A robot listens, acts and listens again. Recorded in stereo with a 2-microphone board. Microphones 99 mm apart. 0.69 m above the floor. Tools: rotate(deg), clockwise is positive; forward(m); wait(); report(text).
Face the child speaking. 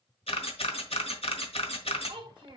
rotate(55)
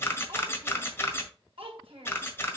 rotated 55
rotate(75)
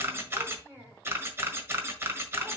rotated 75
rotate(25)
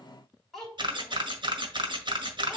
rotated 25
report("Found it: a child speaking, straight ahead, 2 to 4 m away.")